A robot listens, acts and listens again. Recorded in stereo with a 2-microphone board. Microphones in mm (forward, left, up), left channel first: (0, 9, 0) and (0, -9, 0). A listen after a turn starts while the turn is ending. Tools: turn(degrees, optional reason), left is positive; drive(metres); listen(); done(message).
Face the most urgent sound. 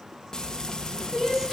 turn(degrees=-25, reason="The crying: about 25° right or 155° right.")
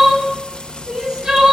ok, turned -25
turn(degrees=-125, reason="So it is at 125° right.")
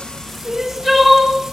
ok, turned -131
done("Facing the crying, 2 to 4 m away.")